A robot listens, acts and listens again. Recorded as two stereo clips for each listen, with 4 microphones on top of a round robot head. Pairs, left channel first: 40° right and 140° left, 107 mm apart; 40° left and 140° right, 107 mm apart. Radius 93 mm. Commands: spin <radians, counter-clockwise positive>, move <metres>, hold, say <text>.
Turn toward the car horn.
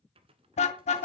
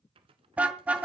spin -1.05
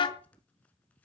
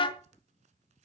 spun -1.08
say Facing the car horn, 2 to 4 m away.